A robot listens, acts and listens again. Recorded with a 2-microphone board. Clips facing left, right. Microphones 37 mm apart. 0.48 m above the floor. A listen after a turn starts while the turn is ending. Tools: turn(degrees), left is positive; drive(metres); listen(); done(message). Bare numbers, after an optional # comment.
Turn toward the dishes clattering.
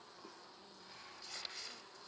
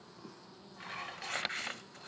# The dishes clattering: about 65° right or 115° right.
turn(-65)
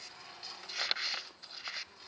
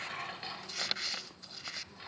# So it is at 30° right.
turn(-30)
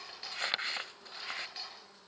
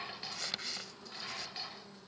done("Found it: dishes clattering, straight ahead, 1 to 2 m away.")